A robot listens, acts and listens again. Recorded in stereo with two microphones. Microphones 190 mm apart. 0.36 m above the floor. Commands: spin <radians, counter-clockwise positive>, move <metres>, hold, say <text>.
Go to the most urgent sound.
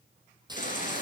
spin 0.79
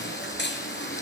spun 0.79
spin 1.57
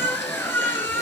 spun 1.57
spin 0.17
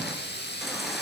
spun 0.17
hold
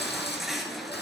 move 1.0
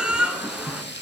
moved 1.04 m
move 1.0
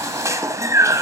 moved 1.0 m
spin -0.35
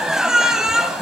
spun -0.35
move 1.0
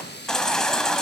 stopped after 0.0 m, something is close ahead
say Arrived at the baby crying, straight ahead.